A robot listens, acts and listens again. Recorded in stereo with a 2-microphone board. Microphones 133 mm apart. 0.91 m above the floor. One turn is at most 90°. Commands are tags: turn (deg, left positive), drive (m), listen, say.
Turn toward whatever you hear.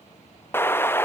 <turn deg="15"/>
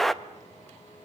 <say>Facing the explosion, under 1 m away.</say>